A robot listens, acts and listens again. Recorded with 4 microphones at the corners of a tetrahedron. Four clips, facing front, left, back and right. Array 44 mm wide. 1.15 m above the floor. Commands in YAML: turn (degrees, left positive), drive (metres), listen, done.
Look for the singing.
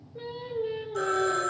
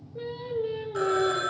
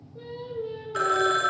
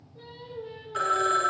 turn: 55
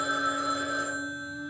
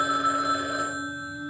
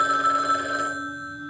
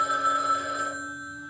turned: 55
listen: true
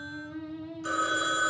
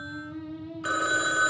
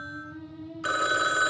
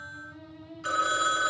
turn: 40
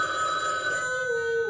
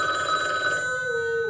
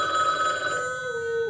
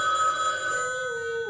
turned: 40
turn: 15
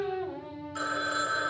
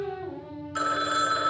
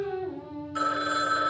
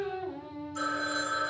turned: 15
done: "Found it: singing, straight ahead."